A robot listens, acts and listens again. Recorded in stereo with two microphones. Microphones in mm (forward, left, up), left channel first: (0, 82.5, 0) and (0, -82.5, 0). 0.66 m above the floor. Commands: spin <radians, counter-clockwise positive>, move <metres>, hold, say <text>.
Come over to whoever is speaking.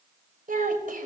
spin -0.96
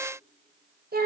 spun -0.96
spin -1.22
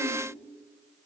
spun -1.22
hold
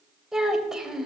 move 1.0
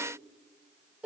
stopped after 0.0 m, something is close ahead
spin -0.17
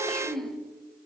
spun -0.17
say Something is in my way. I am facing the child speaking but have not reached it.